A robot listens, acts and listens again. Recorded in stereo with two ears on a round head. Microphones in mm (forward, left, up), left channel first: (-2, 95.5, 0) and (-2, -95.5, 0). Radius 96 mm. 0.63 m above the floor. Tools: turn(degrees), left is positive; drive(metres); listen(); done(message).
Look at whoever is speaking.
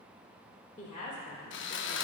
turn(degrees=35)
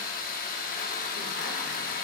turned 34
listen()
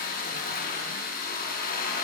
listen()
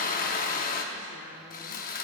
done("I heard a woman speaking, but can't make it out now. It was about straight ahead or 110° left.")